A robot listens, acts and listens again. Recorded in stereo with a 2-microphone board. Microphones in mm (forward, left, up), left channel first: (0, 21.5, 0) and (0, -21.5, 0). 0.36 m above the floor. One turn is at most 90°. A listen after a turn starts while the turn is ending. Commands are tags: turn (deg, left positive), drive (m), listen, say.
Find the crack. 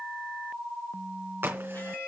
<turn deg="-60"/>
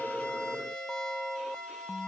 <listen/>
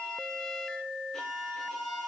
<say>I heard a crack, but can't make it out now. It was about straight ahead or 60° right.</say>